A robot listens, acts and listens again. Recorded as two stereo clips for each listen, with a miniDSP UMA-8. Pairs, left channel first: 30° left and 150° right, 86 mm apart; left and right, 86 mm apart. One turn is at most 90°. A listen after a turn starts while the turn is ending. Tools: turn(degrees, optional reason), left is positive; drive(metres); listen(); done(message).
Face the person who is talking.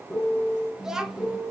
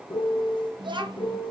turn(degrees=-65, reason="The child speaking: 65° right.")
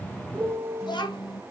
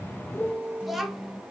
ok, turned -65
done("Found it: a child speaking, straight ahead.")